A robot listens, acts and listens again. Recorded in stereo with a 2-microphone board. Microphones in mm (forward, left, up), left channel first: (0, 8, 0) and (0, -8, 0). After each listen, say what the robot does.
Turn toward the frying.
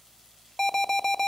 Keep listening.
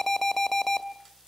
Keep listening.
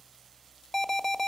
I can't make out frying to turn to.